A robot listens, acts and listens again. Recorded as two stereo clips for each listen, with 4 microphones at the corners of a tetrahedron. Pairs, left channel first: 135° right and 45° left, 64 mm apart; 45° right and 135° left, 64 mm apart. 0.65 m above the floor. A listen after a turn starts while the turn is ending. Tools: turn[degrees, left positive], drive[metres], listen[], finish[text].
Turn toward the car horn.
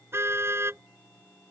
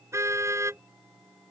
Thought: The car horn: 95° left.
Action: turn[95]
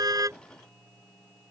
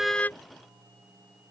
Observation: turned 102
Thought: Nothing new. It was at 10° right.
Action: turn[-10]
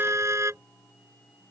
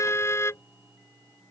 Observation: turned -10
Action: finish[Facing the car horn.]